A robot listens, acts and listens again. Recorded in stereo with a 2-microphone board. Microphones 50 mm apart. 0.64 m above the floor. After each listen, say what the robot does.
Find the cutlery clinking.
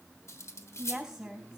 Turn 70° left.
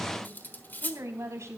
Turn 40° left.
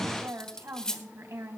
Turn 15° left.
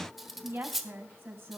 Found it: cutlery clinking, straight ahead.